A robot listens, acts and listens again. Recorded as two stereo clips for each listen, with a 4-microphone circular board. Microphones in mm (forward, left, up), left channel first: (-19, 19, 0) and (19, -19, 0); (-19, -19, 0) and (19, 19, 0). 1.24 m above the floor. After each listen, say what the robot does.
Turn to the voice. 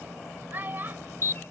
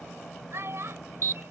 Facing the child speaking.